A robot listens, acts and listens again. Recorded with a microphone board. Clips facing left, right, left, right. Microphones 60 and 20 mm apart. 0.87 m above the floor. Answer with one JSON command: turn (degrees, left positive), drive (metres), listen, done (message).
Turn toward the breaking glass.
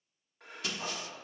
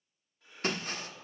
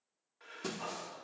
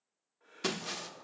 {"turn": -45}
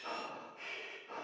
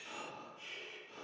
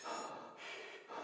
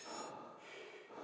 {"listen": true}
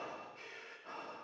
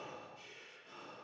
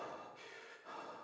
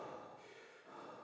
{"done": "I heard breaking glass, but can't make it out now. It was about straight ahead or 90° right."}